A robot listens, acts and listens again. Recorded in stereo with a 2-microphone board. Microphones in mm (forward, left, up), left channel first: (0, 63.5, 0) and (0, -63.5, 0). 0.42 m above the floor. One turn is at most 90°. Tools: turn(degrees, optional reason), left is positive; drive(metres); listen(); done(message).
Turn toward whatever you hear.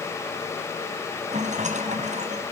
turn(degrees=-70, reason="The rattle: about 70° right or 110° right.")
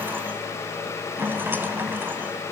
turn(degrees=-20, reason="So it is at 20° right.")
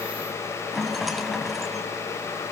done("Facing the rattle, 2 to 4 m away.")